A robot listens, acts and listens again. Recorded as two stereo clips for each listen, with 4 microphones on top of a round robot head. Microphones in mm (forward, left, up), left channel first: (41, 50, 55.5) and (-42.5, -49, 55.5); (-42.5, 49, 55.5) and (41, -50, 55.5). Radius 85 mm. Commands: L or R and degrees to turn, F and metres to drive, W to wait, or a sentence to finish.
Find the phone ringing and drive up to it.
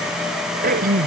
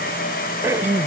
W
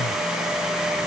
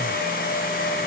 W
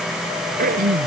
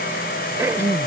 I can't make out a phone ringing to turn to.